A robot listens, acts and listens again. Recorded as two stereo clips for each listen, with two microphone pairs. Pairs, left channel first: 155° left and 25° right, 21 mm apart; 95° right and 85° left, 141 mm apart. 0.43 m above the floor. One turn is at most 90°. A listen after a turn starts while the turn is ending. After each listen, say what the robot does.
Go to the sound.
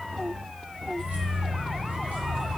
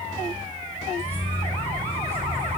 Turn 15° right.
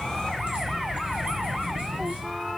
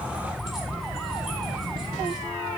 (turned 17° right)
Drive 1.0 m forward.
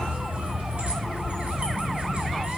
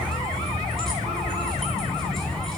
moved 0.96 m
Drive 1.0 m forward.
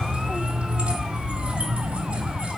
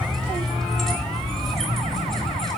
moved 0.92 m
Drive 1.0 m forward.
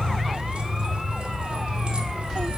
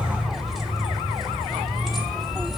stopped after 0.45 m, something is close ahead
Arrived at the keys jangling, straight ahead.